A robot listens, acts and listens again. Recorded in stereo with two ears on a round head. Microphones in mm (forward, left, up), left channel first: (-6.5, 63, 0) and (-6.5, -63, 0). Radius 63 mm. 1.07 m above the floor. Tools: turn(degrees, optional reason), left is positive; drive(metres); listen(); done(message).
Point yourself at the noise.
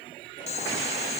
turn(degrees=50, reason="The boiling: about 50° left or 130° left.")
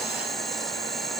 done("Facing the boiling.")